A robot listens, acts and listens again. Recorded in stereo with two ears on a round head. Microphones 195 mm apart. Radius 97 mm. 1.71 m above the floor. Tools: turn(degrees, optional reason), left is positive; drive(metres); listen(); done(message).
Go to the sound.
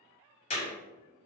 turn(degrees=30, reason="The clap: about 30° left or 150° left.")
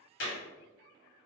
turn(degrees=120, reason="So it is at 120° left.")
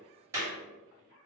turn(degrees=-15, reason="The clap is now 15° right.")
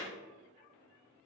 listen()
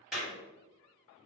drive(metres=1.0)
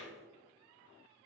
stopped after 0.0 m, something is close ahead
listen()
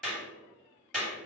done("Something is in my way. I am facing the clap but have not reached it.")